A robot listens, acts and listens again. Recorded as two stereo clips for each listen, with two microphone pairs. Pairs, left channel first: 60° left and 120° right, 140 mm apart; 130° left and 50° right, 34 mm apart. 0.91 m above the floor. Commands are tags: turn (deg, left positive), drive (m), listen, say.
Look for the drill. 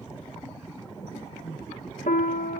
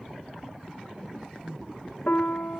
<listen/>
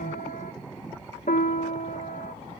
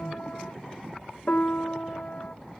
<listen/>
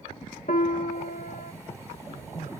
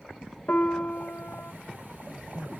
<say>I can't make out a drill to turn to.</say>